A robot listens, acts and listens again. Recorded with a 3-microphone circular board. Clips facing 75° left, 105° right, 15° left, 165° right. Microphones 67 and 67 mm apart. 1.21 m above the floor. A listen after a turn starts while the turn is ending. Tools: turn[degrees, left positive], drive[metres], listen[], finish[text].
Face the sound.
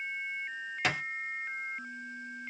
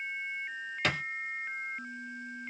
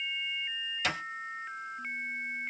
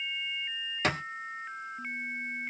Thought: The thud: 155° left.
Action: turn[155]
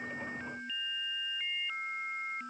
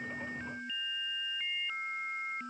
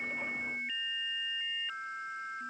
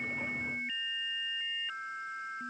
Action: finish[I heard a thud from this way, but can't make it out now.]